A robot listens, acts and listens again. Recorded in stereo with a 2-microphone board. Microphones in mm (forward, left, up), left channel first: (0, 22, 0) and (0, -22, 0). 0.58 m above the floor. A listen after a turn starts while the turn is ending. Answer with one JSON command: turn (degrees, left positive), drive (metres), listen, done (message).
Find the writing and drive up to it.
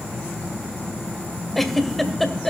{"listen": true}
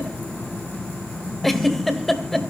{"listen": true}
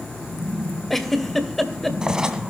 {"turn": -15}
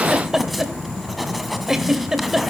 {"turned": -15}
{"drive": 1.0}
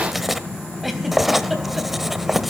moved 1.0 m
{"drive": 1.0}
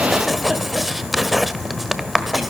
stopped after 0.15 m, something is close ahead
{"done": "I am next to the writing."}